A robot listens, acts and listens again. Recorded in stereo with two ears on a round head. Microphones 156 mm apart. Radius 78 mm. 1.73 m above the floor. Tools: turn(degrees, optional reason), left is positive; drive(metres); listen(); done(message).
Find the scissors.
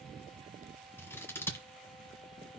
turn(degrees=30)
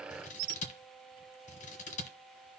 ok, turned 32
turn(degrees=135, reason="So it is at 135° left.")
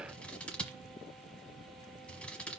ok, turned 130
done("Facing the scissors, 1 to 2 m away.")